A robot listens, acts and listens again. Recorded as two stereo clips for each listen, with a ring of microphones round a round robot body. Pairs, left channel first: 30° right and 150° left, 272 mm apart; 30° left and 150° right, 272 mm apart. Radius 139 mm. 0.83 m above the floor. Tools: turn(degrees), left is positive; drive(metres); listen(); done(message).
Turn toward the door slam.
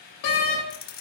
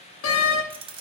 turn(degrees=-15)
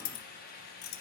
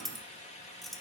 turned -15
done("Facing where the door slam came from. I can't hear it now.")